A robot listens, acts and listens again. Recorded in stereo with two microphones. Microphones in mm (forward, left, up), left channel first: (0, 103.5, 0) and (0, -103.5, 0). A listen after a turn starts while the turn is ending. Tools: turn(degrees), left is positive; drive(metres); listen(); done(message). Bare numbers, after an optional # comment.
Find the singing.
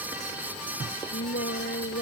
# The singing: about 60° left or 120° left.
turn(60)
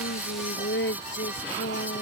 # So it is at 60° left.
turn(60)
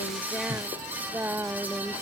# The singing is now 10° right.
turn(-10)
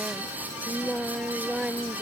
done("Found it: singing, straight ahead.")